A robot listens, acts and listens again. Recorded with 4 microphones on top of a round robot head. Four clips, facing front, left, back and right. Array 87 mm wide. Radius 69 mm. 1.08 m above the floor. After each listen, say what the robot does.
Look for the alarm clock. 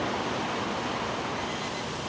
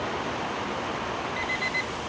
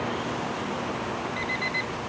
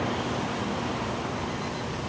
Turn 130° left.
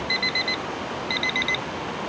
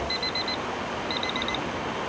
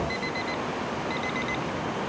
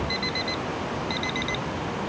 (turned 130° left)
Turn 15° right.
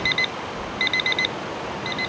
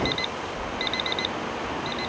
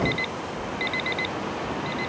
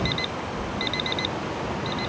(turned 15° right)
Found it: an alarm clock, straight ahead.